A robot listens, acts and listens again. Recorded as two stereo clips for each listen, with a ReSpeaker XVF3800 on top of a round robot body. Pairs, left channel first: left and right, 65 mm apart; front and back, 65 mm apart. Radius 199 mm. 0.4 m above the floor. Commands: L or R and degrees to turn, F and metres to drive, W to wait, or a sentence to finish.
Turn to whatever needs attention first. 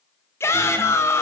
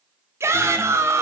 L135
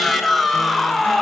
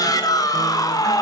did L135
Facing the shout, 2 to 4 m away.